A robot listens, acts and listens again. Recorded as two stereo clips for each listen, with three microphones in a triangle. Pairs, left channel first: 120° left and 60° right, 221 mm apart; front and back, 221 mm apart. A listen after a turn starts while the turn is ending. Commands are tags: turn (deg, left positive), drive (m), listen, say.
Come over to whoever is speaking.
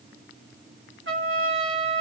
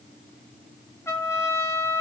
<listen/>
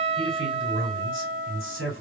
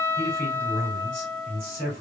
<turn deg="-50"/>
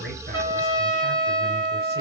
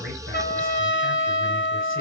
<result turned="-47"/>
<listen/>
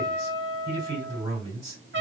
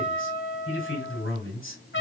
<drive m="1.0"/>
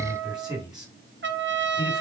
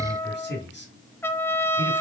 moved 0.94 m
<turn deg="10"/>
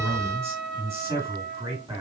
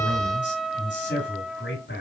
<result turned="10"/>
<drive m="1.0"/>
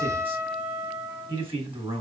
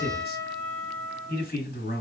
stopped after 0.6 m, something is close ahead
<say>I am next to the man speaking.</say>